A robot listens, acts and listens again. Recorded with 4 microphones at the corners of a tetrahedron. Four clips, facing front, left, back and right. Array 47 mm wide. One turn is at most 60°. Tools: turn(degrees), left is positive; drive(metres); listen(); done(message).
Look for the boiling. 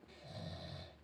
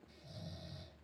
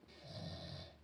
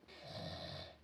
listen()
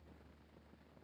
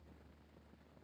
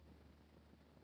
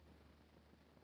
listen()
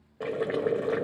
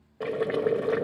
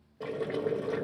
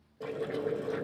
turn(degrees=60)
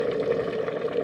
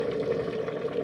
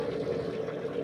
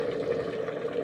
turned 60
done("Facing the boiling, 1 to 2 m away.")